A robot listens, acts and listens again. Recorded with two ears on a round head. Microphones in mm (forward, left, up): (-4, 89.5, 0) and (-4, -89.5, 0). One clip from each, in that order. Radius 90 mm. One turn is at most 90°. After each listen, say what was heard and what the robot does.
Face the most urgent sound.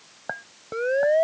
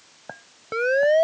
The siren: about 65° right or 115° right. Turn 65° right.
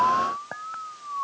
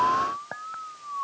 Found it: a siren, straight ahead.